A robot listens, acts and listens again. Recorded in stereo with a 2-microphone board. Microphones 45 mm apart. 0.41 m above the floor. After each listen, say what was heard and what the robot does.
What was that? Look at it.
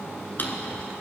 The drawer: about 45° left or 135° left. Turn 45° left.
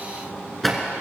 Facing the drawer.